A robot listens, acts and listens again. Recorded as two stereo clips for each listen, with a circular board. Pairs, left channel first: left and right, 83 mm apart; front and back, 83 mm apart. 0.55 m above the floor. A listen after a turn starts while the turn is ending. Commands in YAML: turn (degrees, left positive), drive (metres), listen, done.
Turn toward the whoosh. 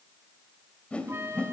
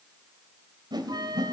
turn: 165
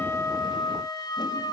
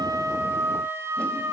listen: true
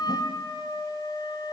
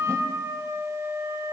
listen: true
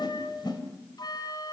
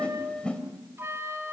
turn: 75
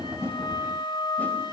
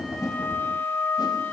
listen: true
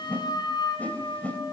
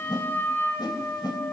turn: 20
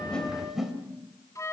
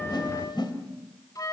done: "Facing the whoosh."